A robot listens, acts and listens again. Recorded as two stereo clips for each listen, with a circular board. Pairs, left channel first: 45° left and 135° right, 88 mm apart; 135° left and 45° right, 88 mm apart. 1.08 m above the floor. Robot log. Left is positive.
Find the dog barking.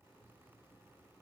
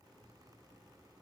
cmd idle
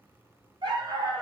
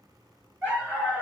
note: The dog barking: 110° right.
cmd yaw -110
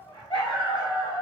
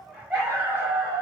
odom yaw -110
note: The dog barking is now 25° left.
cmd yaw +25
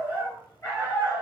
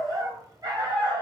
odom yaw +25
note: The dog barking is now 10° right.
cmd yaw -10
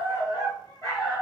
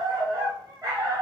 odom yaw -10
end: Facing the dog barking.